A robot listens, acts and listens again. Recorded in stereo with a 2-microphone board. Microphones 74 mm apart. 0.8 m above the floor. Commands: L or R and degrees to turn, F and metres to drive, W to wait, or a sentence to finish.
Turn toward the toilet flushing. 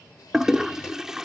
R30
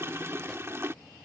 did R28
R145
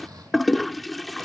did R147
Found it: a toilet flushing, straight ahead.